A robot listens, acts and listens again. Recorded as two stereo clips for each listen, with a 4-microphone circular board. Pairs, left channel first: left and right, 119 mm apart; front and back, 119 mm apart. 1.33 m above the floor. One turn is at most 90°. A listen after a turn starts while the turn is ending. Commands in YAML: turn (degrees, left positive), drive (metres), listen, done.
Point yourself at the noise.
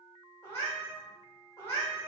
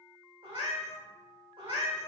turn: 90
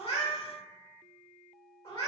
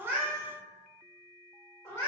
turn: 65
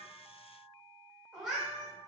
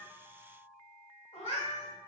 done: "Found it: a cat meowing, straight ahead."